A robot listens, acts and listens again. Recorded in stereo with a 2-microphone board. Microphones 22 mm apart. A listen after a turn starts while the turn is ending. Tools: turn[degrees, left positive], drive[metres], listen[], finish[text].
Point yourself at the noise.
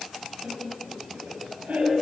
Action: turn[-90]
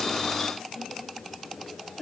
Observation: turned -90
Thought: So it is at 15° left.
Action: turn[15]
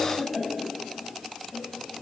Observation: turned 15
Thought: The laughter is now 10° left.
Action: turn[10]
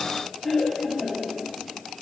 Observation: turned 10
Thought: The laughter is now 10° left.
Action: turn[10]
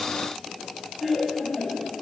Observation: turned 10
Action: finish[Found it: laughter, straight ahead.]